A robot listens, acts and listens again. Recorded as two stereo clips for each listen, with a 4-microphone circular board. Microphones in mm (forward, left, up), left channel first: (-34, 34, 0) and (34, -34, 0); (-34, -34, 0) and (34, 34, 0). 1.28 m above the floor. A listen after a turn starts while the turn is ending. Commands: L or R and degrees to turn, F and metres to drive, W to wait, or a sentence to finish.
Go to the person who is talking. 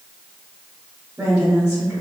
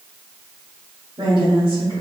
L15
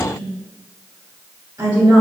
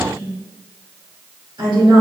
F1.0
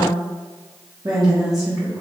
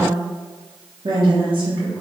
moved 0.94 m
F1.0
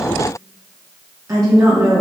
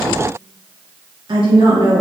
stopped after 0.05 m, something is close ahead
I am next to the woman speaking.